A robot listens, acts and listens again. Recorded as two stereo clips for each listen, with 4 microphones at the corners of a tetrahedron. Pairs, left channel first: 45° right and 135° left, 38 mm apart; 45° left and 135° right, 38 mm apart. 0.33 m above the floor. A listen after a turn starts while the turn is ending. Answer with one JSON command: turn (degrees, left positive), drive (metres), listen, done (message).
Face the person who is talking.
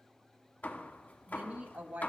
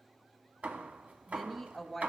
{"turn": 135}
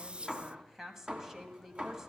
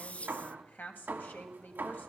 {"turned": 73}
{"turn": 60}
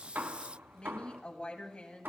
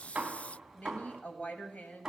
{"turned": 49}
{"turn": 10}
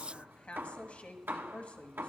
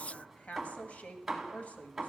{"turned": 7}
{"done": "Found it: a woman speaking, straight ahead."}